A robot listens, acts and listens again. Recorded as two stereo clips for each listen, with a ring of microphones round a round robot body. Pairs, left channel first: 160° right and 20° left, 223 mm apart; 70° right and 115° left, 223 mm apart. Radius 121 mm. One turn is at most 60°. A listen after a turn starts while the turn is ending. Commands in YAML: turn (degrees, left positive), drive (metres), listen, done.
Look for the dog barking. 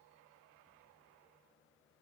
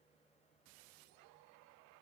listen: true
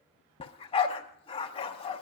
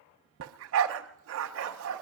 turn: 60
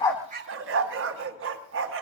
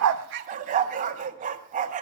turn: 55
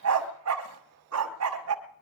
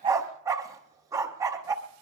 turn: 35
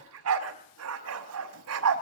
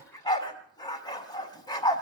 done: "Found it: a dog barking, straight ahead, 1 to 2 m away."